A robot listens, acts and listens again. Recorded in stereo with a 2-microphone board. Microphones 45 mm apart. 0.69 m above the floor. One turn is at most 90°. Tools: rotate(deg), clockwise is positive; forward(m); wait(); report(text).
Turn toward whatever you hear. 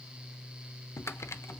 rotate(-90)
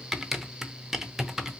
rotate(10)
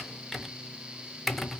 report("Facing the typing on a keyboard.")